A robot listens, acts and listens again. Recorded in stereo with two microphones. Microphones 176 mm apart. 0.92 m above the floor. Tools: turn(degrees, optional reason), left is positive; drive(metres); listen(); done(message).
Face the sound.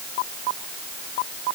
listen()
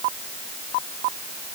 listen()
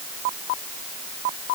done("I can't make out anything to turn to.")